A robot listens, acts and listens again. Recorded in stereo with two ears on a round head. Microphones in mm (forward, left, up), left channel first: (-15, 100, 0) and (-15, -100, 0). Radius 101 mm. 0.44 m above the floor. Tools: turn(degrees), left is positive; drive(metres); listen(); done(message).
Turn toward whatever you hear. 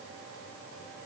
listen()
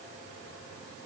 listen()
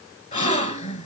turn(degrees=35)
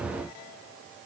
listen()
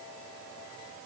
done("I heard a gasp, but can't make it out now. It was about straight ahead or 110° left.")